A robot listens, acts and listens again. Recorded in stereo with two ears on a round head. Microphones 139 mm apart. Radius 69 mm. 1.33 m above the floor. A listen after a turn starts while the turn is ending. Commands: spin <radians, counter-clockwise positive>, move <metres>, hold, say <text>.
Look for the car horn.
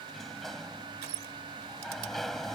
hold
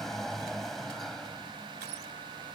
hold
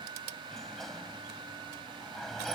say I can't make out a car horn to turn to.